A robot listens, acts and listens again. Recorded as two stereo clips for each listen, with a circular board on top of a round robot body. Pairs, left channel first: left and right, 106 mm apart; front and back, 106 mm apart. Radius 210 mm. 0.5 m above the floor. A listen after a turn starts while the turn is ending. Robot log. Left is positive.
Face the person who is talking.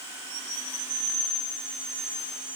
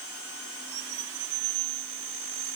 cmd idle
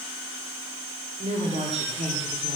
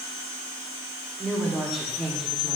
note: The woman speaking: 90° right.
cmd yaw -90
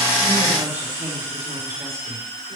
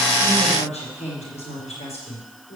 note: The woman speaking is now 20° right.
cmd yaw -20
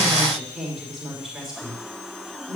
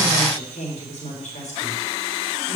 end: Facing the woman speaking.